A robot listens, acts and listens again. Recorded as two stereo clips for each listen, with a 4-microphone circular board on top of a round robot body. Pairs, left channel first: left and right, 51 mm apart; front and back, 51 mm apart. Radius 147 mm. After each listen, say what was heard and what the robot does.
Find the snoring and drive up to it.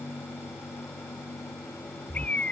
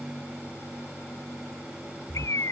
The snoring: 45° right. Turn 45° right.
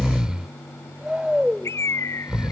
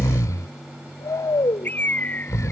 The snoring is now 15° right. Turn 15° right.
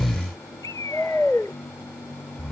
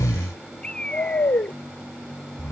Drive 1.0 m forward.
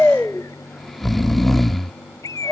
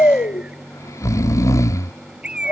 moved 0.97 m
Drive 1.0 m forward.
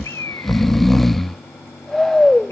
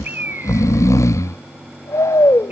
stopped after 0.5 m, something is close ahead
Arrived at the snoring, straight ahead.